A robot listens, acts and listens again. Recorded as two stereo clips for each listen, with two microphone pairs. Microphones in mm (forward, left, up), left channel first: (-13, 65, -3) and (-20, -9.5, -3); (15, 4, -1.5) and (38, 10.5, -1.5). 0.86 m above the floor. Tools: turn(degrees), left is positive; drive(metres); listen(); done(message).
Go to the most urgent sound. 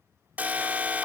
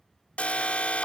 turn(degrees=-165)
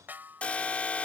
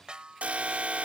turn(degrees=15)
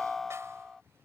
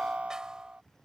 drive(metres=1.0)
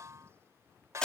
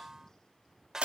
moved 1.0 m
turn(degrees=10)
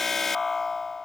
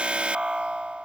drive(metres=1.0)
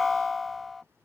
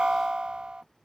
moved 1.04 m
drive(metres=1.0)
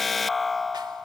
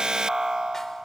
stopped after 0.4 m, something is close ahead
done("Arrived at the alarm, straight ahead.")